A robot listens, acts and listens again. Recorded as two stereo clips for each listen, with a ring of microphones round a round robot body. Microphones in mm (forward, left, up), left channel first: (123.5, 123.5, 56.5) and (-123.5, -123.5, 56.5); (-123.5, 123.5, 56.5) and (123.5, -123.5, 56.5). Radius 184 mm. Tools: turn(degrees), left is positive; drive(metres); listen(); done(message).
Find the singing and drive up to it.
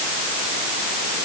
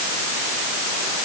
listen()
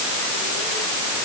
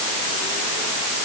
listen()
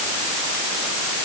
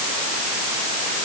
done("I can't make out singing.")